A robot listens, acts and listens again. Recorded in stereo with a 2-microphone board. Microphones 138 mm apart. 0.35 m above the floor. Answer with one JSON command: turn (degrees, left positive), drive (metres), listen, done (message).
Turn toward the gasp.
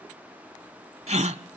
{"turn": -55}
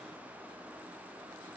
{"listen": true}
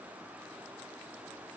{"done": "I heard a gasp, but can't make it out now. It was about straight ahead or 70° right."}